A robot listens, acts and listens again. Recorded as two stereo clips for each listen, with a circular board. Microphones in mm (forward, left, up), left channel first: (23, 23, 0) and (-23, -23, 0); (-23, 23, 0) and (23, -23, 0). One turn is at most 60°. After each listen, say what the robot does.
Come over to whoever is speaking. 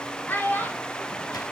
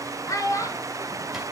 Turn 60° left.
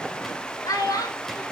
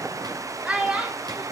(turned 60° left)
Turn 25° left.
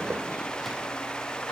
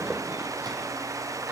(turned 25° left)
Keep listening.
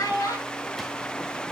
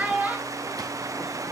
Turn 25° left.
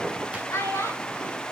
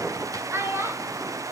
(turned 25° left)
Drive 1.0 m forward.
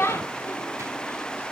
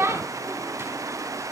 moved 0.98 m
Drive 1.0 m forward.
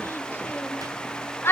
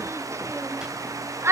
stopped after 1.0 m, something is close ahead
I am next to the child speaking.